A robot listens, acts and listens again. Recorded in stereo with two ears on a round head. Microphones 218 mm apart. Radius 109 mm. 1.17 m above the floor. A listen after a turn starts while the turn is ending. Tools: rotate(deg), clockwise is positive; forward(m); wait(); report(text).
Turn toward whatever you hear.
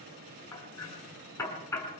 rotate(-30)
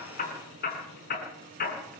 rotate(-140)
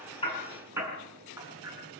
rotate(10)
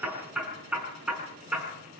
report("Facing the hammering, over 4 m away.")